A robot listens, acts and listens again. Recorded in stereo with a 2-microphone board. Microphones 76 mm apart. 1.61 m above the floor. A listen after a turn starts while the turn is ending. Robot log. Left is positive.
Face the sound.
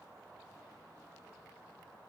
cmd idle
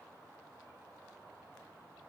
cmd idle
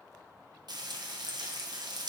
note: The frying: about 70° right or 110° right.
cmd yaw -70
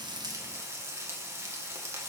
note: So it is at 35° right.
cmd yaw -35
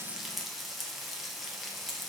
end: Facing the frying.